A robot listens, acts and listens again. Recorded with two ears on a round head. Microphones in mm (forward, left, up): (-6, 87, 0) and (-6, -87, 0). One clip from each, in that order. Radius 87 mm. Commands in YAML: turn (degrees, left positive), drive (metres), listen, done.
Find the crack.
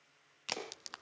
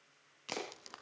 turn: 40
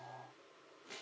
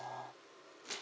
listen: true
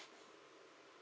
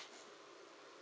done: "I heard a crack, but can't make it out now. It was about straight ahead or 100° left."